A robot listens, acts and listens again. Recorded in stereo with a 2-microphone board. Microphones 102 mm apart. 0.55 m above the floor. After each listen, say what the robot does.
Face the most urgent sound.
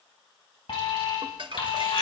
Turn 65° left.
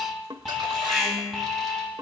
Facing the alarm.